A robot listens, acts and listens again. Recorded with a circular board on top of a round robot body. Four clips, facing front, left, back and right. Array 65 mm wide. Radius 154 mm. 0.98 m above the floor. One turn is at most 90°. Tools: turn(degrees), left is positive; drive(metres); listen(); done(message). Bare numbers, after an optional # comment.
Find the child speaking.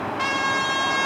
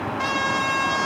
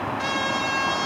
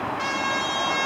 listen()
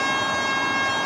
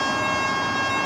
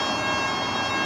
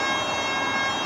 listen()
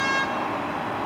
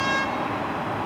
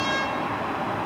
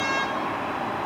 done("I can't make out a child speaking to turn to.")